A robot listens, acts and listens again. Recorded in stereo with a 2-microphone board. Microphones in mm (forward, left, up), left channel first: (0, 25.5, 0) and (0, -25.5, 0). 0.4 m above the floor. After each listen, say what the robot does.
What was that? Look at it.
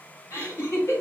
Turn 65° left.
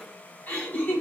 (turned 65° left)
Turn 35° left.
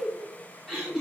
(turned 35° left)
Turn 10° left.
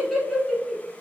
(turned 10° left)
Found it: laughter, straight ahead.